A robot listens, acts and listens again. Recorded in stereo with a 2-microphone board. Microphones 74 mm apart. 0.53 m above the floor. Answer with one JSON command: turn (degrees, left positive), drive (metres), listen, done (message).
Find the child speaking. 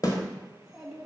{"turn": -30}
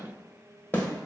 {"listen": true}
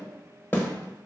{"listen": true}
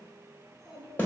{"turn": -30}
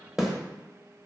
{"listen": true}
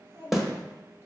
{"turn": -155}
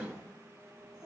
{"done": "Facing the child speaking, 2 to 4 m away."}